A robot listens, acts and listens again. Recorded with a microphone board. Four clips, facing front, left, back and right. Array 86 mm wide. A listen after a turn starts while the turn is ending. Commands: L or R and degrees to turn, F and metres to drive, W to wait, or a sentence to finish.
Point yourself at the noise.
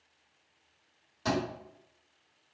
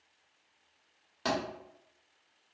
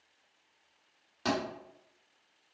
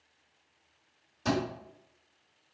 L115
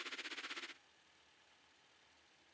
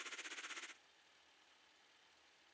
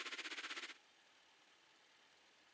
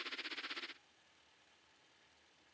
Facing where the thud came from. I can't hear it now.